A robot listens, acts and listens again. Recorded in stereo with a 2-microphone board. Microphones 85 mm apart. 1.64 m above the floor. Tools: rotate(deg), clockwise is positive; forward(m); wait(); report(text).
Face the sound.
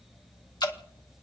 rotate(-55)
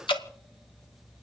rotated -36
rotate(-85)
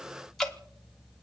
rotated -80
report("Found it: dripping, straight ahead.")